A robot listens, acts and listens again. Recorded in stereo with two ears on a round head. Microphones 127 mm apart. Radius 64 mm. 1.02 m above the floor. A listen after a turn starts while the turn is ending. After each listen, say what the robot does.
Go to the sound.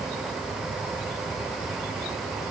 Keep listening.
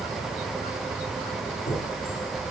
Turn 90° left.
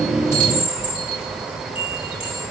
Drive 1.0 m forward.
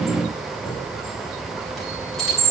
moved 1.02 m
Drive 1.0 m forward.
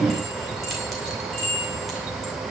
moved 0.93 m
Drive 1.0 m forward.
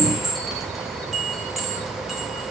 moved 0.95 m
Drive 1.0 m forward.
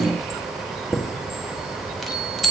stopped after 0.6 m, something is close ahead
I am next to the chime.